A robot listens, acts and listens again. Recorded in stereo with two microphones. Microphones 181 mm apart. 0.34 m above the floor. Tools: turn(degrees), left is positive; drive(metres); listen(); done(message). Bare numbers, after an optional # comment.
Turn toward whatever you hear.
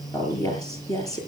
# The woman speaking: about 20° left or 160° left.
turn(20)
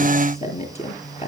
# So it is at 140° left.
turn(140)
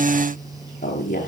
# The woman speaking is now 45° left.
turn(45)
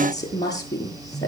# The woman speaking is now 20° left.
turn(20)
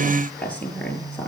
done("Found it: a woman speaking, straight ahead, over 4 m away.")